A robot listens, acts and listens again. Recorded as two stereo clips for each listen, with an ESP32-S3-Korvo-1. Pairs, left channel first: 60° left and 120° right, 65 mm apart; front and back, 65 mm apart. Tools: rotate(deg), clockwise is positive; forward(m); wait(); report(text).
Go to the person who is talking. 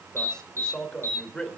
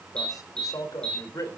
rotate(15)
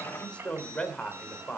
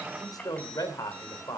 rotate(10)
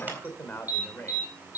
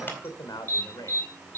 forward(1.0)
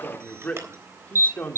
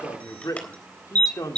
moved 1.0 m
forward(1.0)
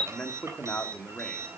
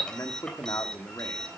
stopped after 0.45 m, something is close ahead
report("Arrived at the man speaking, straight ahead.")